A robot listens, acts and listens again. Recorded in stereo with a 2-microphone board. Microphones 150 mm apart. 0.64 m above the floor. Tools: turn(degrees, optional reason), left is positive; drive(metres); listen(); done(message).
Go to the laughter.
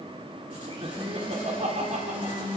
turn(degrees=-55, reason="The laughter: about 55° right or 125° right.")
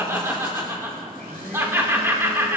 turn(degrees=-20, reason="So it is at 20° right.")
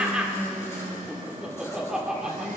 drive(metres=1.0)
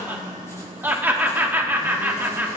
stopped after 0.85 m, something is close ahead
turn(degrees=-20, reason="The laughter is now 20° right.")
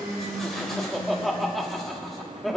done("I am next to the laughter.")